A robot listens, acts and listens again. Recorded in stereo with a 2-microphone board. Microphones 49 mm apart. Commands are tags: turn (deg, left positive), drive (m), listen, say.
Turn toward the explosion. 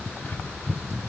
<listen/>
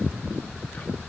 <listen/>
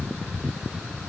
<say>I can't make out an explosion.</say>